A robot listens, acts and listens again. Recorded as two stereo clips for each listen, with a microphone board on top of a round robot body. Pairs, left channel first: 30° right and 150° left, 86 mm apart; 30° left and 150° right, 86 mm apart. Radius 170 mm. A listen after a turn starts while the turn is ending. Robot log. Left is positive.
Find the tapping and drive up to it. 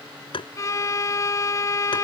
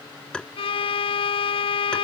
note: The tapping: 50° right.
cmd yaw -50
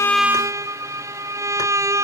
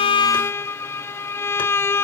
cmd idle
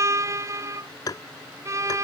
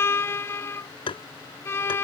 note: The tapping is now 15° left.
cmd yaw +15
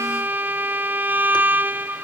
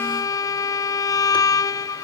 cmd idle
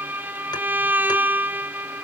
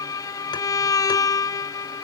cmd idle
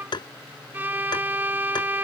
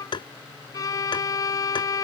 cmd fwd 1.0
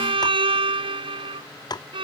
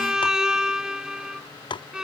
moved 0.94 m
note: The tapping is now 10° left.
cmd yaw +10
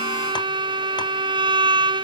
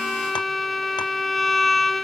cmd idle
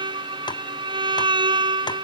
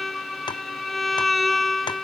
cmd idle
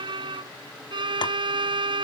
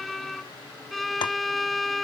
end: I heard tapping from this way, but can't make it out now. I did not reach it.